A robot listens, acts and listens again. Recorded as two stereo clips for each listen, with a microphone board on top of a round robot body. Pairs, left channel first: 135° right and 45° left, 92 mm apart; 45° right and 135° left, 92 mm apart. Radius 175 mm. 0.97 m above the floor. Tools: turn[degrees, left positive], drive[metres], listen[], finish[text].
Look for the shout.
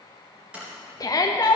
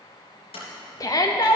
Thought: The shout: 90° right.
Action: turn[-90]
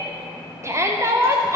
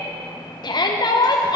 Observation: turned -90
Thought: The shout is now 10° right.
Action: turn[-10]
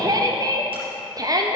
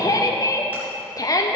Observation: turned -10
Action: finish[Found it: a shout, straight ahead, under 1 m away.]